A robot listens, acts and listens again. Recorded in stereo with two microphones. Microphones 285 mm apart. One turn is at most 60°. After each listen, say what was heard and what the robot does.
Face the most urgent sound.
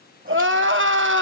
The crying: about 45° right or 135° right. Turn 45° right.
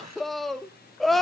Found it: crying, straight ahead.